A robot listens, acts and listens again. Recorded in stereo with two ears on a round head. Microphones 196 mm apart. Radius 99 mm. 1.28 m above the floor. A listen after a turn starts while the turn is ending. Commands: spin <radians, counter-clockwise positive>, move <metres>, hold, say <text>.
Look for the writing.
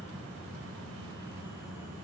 hold
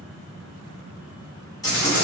spin 0.26
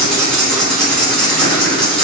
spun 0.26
say Found it: writing, straight ahead, 1 to 2 m away.